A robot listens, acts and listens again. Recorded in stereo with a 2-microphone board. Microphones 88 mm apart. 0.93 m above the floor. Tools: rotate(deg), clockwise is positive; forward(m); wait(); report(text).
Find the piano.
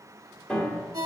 rotate(-30)
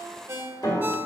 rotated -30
rotate(-135)
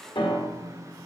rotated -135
rotate(-75)
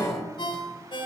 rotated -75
report("Found it: a piano, straight ahead.")